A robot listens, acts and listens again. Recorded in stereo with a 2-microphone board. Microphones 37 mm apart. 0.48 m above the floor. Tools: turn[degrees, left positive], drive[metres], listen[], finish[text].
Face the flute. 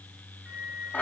Thought: The flute: about 40° right or 140° right.
Action: turn[-40]
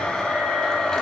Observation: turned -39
Action: listen[]
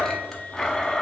Action: listen[]
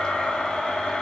Action: finish[I heard a flute, but can't make it out now. It was about straight ahead or 105° right.]